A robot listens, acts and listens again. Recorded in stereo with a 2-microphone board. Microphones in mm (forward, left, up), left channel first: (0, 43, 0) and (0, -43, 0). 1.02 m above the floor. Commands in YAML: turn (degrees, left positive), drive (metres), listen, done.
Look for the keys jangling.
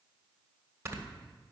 listen: true
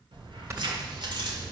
turn: -55
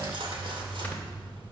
turn: -85
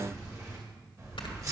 turn: -40
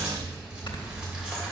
turn: -10
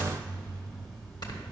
done: "Found it: keys jangling, straight ahead."